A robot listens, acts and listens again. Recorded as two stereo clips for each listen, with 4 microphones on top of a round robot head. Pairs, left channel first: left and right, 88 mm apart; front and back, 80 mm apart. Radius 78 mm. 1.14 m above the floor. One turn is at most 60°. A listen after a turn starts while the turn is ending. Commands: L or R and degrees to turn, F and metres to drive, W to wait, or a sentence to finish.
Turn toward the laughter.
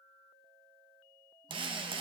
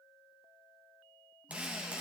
W
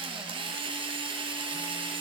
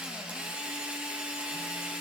W
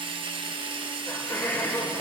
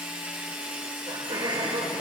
L60
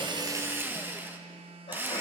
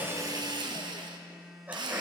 L60
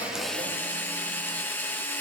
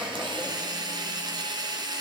L40
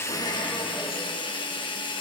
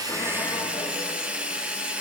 Facing where the laughter came from. I can't hear it now.